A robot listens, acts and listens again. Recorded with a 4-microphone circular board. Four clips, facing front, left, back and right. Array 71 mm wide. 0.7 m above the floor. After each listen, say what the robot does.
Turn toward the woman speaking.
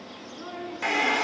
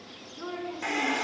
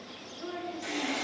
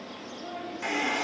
Turn 60° left.
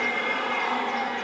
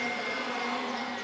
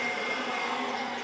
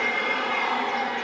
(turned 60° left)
Keep listening.
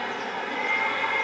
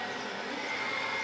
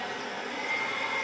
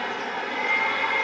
Keep listening.
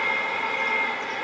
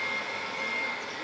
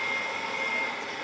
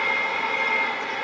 I heard a woman speaking from this way, but can't make it out now.